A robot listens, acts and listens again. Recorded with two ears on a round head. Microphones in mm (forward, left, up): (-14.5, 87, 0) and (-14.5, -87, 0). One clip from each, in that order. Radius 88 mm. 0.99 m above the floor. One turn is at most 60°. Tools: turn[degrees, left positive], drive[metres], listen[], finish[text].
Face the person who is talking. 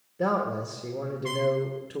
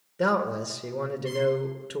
Thought: The man speaking: about 45° right or 135° right.
Action: turn[-45]
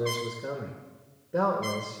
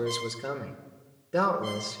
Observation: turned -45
Thought: So it is at 90° right.
Action: turn[-60]
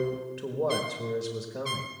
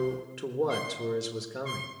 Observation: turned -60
Thought: The man speaking is now 45° right.
Action: turn[-45]
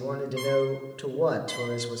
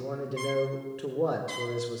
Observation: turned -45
Thought: The man speaking is now 15° left.
Action: turn[15]
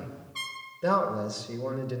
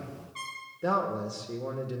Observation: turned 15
Action: finish[Found it: a man speaking, straight ahead, 1 to 2 m away.]